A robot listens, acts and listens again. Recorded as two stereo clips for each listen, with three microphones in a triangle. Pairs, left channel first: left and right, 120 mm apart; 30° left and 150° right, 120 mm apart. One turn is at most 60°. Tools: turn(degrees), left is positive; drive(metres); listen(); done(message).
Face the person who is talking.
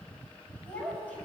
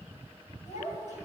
turn(degrees=10)
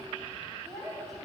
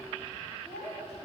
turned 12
done("Facing the child speaking, over 4 m away.")